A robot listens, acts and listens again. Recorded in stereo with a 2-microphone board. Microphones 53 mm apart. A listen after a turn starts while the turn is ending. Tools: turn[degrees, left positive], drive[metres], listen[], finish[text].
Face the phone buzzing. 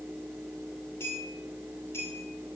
Action: listen[]
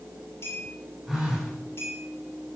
Action: turn[-30]
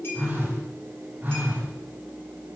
Thought: So it is at 145° right.
Action: turn[-145]
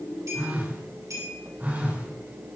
Thought: The phone buzzing is now 35° right.
Action: turn[-35]
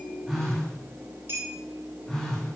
Thought: The phone buzzing is now 10° left.
Action: turn[10]
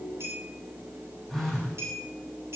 Action: finish[Found it: a phone buzzing, straight ahead, over 4 m away.]